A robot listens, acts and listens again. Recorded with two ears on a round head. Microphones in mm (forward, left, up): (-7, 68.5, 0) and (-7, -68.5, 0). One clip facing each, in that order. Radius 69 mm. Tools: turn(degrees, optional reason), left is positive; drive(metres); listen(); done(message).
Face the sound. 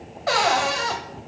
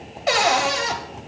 turn(degrees=-25, reason="The cupboard door: about 25° right or 155° right.")
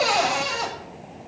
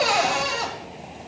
done("Found it: a cupboard door, straight ahead, 1 to 2 m away.")